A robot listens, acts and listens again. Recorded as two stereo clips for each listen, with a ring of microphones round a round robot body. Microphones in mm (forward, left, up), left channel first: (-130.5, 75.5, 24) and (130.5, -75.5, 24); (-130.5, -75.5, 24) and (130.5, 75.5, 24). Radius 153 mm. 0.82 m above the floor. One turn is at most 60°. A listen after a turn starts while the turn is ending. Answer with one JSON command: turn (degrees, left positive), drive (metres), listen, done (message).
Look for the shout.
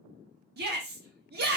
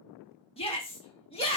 {"turn": -60}
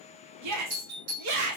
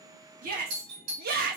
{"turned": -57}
{"turn": -25}
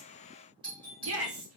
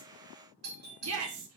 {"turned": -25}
{"done": "Facing the shout, 1 to 2 m away."}